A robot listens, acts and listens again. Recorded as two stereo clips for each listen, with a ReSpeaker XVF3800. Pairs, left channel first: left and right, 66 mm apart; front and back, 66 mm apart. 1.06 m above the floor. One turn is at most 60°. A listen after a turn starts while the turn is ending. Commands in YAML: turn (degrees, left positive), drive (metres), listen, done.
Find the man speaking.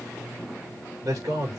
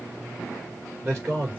turn: -60
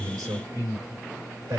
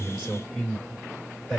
turn: -60
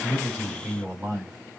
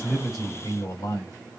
turn: -20
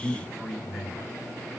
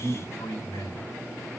done: "Facing the man speaking."